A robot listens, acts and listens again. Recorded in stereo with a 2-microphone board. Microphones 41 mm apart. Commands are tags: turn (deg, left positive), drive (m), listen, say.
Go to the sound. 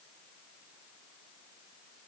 <listen/>
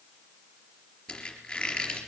<turn deg="20"/>
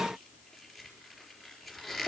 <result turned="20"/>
<drive m="1.0"/>
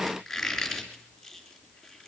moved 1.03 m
<drive m="1.0"/>
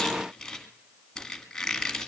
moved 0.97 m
<turn deg="10"/>
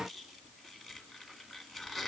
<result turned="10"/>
<drive m="1.0"/>
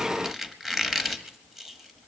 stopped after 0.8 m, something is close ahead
<turn deg="-10"/>
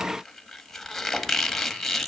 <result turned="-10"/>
<say>I am next to the squeak.</say>